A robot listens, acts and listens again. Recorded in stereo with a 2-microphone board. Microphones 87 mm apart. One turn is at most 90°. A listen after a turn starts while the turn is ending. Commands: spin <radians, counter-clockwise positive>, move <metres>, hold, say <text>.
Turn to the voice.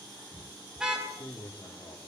spin 0.79
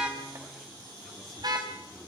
hold
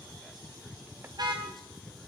hold
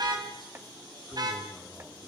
say I heard a man speaking, but can't make it out now. It was about straight ahead or 90° left.